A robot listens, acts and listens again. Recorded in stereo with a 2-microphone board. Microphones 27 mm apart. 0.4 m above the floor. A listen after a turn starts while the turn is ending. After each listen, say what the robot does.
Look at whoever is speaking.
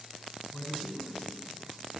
Turn 60° left.
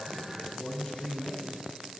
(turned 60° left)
Turn 60° left.
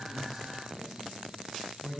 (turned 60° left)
Found it: a man speaking, straight ahead.